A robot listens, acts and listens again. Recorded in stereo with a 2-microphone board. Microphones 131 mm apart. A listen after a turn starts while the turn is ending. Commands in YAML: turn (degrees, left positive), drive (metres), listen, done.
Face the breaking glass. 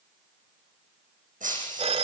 turn: -90
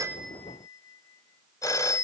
done: "I heard breaking glass from this way, but can't make it out now."